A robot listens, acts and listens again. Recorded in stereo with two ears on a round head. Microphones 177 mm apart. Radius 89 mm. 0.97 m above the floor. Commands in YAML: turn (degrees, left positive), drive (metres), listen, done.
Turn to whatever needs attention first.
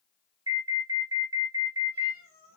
turn: -20
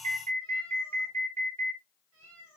turn: -145
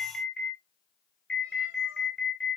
done: "Facing the alarm."